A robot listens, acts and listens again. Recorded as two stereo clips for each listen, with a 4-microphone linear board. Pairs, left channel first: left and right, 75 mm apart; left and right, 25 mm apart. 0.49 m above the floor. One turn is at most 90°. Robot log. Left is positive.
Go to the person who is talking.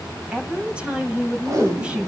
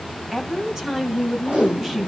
cmd yaw -30
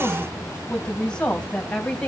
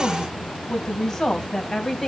note: So it is at 15° left.
cmd yaw +15
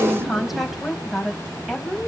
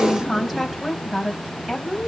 cmd fwd 1.0
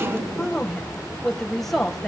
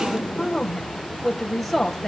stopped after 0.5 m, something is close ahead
end: Something is in my way. I am facing the woman speaking but have not reached it.